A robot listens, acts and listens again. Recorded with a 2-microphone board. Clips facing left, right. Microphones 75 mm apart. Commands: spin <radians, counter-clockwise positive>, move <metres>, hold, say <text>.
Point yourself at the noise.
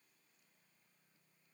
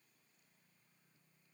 hold
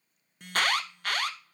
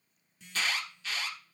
spin 0.96
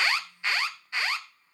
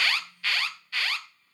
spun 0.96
spin 0.44
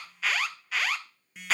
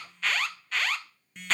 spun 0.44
say Facing the alarm.